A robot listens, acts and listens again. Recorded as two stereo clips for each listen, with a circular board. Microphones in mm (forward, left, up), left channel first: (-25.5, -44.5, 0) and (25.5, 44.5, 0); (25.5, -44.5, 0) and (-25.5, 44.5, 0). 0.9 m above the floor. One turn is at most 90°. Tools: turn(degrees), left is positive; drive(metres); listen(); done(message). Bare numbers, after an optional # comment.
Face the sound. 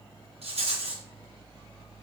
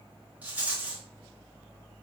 # The rattle: 45° left.
turn(45)
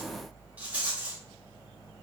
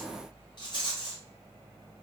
# The rattle is now 15° right.
turn(-15)
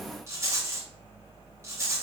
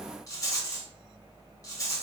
done("Facing the rattle.")